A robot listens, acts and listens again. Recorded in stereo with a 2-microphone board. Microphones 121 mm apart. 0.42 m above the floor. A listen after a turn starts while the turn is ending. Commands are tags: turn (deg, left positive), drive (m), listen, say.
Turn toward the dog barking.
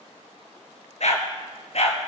<turn deg="60"/>
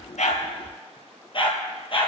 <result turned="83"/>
<turn deg="45"/>
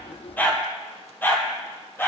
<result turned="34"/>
<turn deg="15"/>
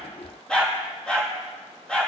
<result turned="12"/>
<say>Facing the dog barking, 2 to 4 m away.</say>